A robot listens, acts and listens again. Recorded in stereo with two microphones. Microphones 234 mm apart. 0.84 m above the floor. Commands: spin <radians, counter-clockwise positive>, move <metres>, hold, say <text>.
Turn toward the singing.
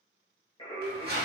spin 0.44
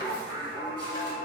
spin 0.52
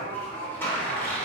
spin 0.35
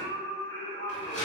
spin 0.44
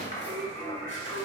spin 0.17
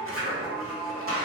say Found it: singing, straight ahead, 2 to 4 m away.